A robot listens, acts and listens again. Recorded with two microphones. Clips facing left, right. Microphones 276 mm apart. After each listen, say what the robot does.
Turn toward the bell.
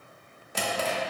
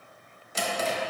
Keep listening.
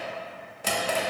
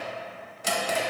Keep listening.
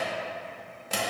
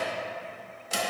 I can't make out a bell, only a drawer.